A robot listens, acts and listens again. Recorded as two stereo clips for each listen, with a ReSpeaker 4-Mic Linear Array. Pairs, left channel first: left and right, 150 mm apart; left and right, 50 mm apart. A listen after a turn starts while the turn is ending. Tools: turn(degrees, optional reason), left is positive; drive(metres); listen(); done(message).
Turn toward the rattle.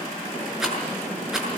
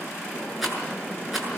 turn(degrees=-30)
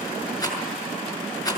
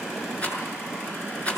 turn(degrees=25, reason="So it is at 25° left.")
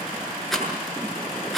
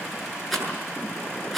done("Facing the rattle, over 4 m away.")